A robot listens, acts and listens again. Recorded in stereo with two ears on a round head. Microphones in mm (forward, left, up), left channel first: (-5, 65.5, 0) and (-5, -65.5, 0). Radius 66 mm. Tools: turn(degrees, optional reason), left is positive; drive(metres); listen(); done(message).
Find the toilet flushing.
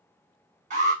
listen()
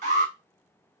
listen()
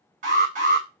done("I can't make out a toilet flushing to turn to.")